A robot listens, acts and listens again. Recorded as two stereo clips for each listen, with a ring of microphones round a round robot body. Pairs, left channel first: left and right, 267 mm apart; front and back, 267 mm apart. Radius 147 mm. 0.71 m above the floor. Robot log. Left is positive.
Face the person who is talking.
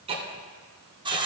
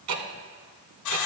cmd idle
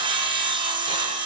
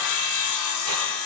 cmd idle
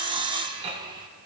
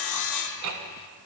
end: I can't make out anyone speaking, only ticking and sawing.